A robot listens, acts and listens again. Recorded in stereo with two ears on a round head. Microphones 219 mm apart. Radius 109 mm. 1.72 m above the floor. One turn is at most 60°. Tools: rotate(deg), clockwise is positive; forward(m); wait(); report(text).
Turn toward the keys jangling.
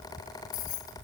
rotate(-60)
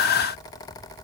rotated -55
wait()
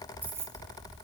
rotate(10)
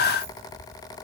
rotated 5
wait()
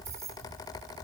rotate(15)
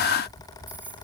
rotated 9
rotate(10)
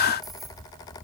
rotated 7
wait()
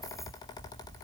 wait()
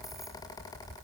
report("Facing where the keys jangling came from. I can't hear it now.")